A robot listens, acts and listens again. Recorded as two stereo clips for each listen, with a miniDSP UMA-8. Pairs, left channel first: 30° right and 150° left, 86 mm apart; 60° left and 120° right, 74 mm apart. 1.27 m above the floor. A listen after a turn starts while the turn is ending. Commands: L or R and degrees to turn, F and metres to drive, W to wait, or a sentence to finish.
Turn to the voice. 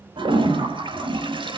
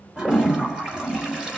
W
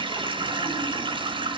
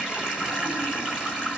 W
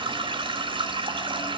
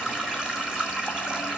I can't make out anyone speaking to turn to.